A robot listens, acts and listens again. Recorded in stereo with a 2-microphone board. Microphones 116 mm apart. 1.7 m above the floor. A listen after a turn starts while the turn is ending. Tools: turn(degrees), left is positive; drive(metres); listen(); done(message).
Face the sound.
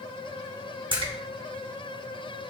turn(degrees=-45)
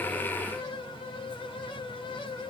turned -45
listen()
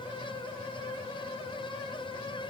done("I heard a splash, but can't make it out now. It was about straight ahead or 90° right.")